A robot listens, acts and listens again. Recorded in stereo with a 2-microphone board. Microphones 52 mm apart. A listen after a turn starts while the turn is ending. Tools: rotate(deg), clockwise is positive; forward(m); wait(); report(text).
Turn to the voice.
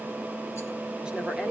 wait()
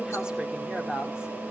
rotate(15)
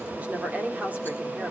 rotate(150)
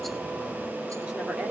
rotate(25)
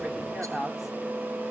report("Found it: a woman speaking, straight ahead, 2 to 4 m away.")